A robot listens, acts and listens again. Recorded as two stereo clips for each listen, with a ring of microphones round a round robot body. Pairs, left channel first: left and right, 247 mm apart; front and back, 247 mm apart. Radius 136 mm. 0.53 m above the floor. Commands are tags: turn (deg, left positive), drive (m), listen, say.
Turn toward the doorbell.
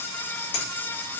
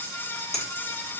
<listen/>
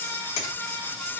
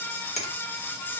<listen/>
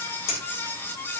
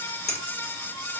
<say>I can't make out a doorbell, only a finger snap.</say>